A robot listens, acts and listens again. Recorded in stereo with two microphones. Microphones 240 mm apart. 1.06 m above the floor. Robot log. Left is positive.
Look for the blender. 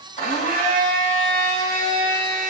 note: The blender: about 35° left or 145° left.
cmd yaw +35
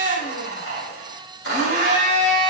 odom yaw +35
note: So it is at 110° left.
cmd yaw +110
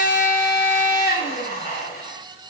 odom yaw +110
note: The blender is now 45° left.
cmd yaw +45
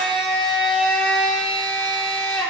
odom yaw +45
end: Facing the blender.